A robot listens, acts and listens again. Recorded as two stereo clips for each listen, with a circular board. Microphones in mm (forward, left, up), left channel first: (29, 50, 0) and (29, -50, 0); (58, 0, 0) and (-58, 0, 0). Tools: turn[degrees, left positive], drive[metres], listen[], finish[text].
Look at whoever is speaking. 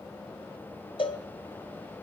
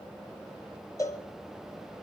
Action: listen[]
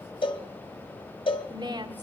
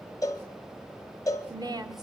Thought: The woman speaking: 130° right.
Action: turn[-130]
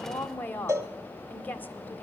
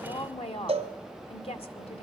Thought: The woman speaking is now 20° left.
Action: turn[20]
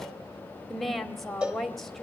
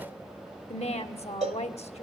Action: finish[Facing the woman speaking, 1 to 2 m away.]